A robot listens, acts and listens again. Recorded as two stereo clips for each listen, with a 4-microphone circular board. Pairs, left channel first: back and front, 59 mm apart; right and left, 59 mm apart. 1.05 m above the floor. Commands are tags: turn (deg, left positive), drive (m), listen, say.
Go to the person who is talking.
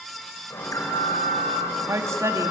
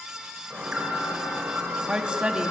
<turn deg="20"/>
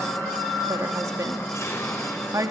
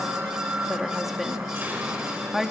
<drive m="1.0"/>
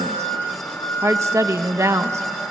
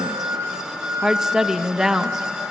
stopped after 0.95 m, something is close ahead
<turn deg="10"/>
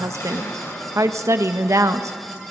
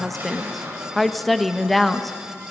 <say>I am next to the woman speaking.</say>